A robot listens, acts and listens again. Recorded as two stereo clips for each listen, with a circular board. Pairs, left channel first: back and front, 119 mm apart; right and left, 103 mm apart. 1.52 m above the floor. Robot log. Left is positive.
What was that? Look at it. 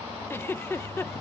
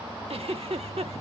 note: The giggle: 110° left.
cmd yaw +110
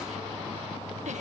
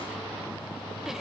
cmd idle
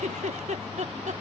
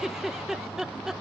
end: Facing the giggle.